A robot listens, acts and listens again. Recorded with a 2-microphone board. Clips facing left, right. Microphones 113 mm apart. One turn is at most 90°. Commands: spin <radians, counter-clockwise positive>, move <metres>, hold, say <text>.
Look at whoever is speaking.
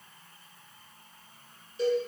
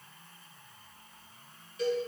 hold
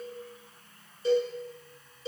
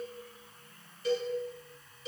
hold
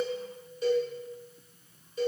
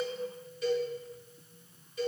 say I can't make out anyone speaking, only a cowbell.